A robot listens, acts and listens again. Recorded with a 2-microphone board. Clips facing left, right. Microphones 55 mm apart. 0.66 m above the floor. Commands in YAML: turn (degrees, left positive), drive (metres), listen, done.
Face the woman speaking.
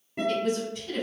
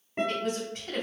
turn: -50
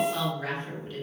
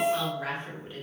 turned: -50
turn: -20
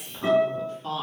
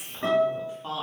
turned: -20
turn: -15
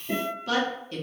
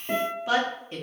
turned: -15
turn: -25
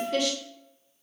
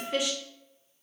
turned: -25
turn: -15
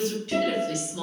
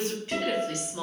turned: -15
turn: -30
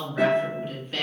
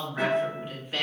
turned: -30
turn: -10
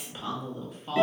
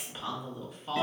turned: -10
done: "Found it: a woman speaking, straight ahead, 1 to 2 m away."